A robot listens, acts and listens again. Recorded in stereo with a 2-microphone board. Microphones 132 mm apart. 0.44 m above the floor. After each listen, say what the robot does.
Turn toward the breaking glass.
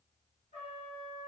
Keep listening.
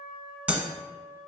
Turn 30° right.
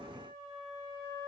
Keep listening.
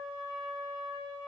I heard breaking glass, but can't make it out now. It was about 20° left or 140° right.